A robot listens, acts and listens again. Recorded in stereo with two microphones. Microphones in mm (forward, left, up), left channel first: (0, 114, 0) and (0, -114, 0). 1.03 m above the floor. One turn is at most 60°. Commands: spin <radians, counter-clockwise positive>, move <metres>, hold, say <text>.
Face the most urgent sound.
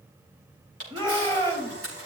spin -0.35
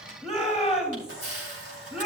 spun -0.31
say Found it: a shout, straight ahead, 2 to 4 m away.